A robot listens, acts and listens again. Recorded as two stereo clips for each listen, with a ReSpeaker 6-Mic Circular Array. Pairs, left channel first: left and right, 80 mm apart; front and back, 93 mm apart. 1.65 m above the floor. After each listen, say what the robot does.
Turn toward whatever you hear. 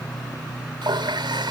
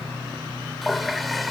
Turn 90° right.
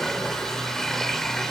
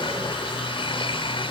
Facing the running tap.